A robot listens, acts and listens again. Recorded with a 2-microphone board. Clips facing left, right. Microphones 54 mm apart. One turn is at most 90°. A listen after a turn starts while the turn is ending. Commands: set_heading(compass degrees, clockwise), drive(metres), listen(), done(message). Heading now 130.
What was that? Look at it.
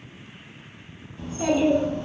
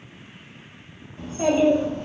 set_heading(160)
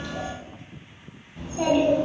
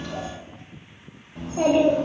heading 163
set_heading(253)
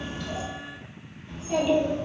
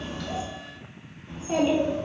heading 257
set_heading(277)
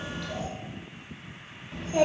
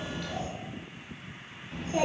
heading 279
done("Found it: a child speaking, straight ahead, 1 to 2 m away.")